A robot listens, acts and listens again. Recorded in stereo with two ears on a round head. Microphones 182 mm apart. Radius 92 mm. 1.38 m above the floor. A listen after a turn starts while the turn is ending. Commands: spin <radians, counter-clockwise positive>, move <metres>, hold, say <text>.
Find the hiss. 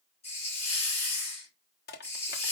spin 0.52
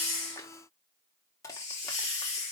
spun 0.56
spin 2.01
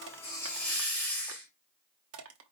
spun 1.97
say Facing the hiss, 2 to 4 m away.